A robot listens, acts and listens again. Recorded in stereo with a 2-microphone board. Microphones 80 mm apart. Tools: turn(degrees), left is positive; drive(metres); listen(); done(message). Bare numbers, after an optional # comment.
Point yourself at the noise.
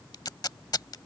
# The tape being pulled: about 60° left or 120° left.
turn(60)
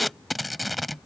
done("Facing the tape being pulled.")